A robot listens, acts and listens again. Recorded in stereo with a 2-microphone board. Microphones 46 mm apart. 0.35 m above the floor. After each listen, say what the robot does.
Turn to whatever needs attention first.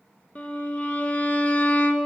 Keep listening.
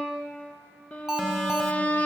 Turn 30° right.
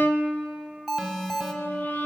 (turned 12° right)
Facing the alarm.